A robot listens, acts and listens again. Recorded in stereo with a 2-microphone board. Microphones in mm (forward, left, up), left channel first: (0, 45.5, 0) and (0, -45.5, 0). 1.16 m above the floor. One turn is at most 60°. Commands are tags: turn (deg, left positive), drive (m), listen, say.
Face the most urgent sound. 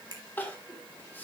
<turn deg="20"/>
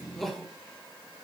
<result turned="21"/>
<say>Facing the crying.</say>